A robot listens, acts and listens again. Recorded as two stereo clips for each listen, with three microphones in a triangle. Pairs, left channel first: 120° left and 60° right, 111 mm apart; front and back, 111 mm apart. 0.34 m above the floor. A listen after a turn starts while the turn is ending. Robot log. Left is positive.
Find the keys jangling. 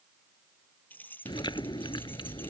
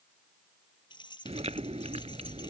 note: The keys jangling: 45° left.
cmd yaw +45
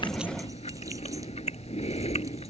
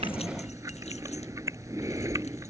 cmd idle
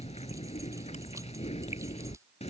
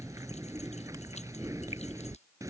cmd idle
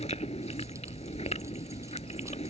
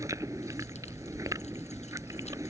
end: I heard keys jangling from this way, but can't make it out now.